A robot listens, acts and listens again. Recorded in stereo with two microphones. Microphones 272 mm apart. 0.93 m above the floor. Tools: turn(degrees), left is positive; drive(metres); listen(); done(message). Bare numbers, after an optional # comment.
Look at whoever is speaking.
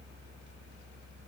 listen()
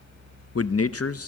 # The man speaking: about 60° left or 120° left.
turn(60)
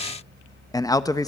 # So it is at 15° left.
turn(15)
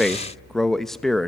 done("Found it: a man speaking, straight ahead, under 1 m away.")